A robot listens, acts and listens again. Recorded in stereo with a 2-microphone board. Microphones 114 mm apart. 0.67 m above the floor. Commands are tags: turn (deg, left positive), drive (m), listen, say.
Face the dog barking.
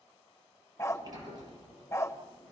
<turn deg="25"/>
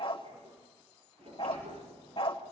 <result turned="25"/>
<turn deg="130"/>
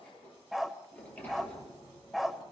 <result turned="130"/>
<say>Facing the dog barking, 1 to 2 m away.</say>